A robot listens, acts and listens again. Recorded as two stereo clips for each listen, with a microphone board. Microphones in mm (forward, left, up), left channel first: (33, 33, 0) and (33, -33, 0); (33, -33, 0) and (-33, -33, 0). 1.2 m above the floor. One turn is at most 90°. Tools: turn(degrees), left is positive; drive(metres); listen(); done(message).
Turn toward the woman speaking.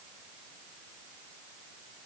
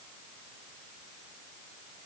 listen()
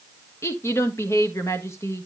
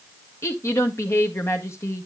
turn(degrees=45)
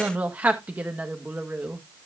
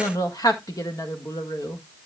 turn(degrees=-25)
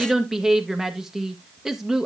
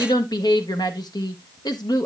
done("Facing the woman speaking, 1 to 2 m away.")